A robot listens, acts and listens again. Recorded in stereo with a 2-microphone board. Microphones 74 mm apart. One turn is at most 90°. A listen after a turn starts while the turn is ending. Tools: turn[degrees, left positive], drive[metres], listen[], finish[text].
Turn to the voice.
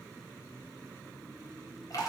Action: listen[]
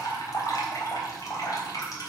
Action: listen[]
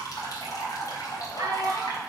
Thought: The child speaking: about 50° right or 130° right.
Action: turn[-50]
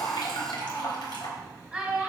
Action: finish[Facing the child speaking.]